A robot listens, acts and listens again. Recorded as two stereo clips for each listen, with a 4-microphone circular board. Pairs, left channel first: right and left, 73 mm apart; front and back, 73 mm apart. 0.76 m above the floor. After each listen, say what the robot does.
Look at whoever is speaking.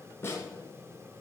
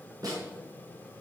Keep listening.
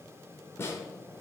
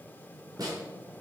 Keep listening.
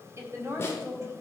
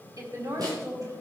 Turn 145° left.
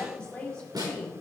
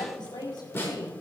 Turn 10° right.
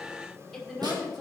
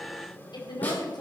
Facing the woman speaking, over 4 m away.